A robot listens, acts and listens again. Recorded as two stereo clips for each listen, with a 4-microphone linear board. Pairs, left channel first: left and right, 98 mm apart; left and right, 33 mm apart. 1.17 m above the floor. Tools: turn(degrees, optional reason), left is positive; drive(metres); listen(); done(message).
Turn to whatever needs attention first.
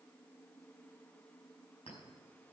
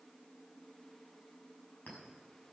listen()
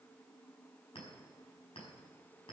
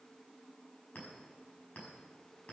listen()
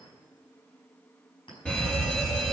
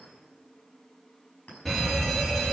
turn(degrees=30)
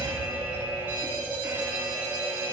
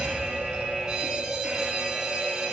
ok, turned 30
turn(degrees=-20, reason="So it is at 20° right.")
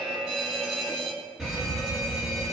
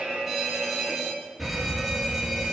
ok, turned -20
done("Facing the fire alarm.")